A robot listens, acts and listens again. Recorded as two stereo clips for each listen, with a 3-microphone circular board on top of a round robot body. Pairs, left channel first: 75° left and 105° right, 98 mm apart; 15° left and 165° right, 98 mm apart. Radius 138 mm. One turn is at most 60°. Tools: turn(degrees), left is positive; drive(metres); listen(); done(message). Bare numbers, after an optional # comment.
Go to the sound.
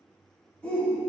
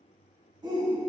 # The shout: 155° left.
turn(60)
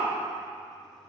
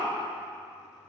# The shout is now 80° left.
turn(60)
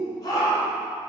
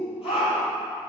# The shout is now 25° left.
turn(25)
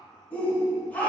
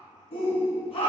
drive(1.0)
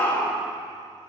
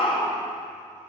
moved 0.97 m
drive(1.0)
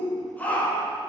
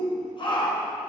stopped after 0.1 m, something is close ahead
done("Arrived at the shout, straight ahead.")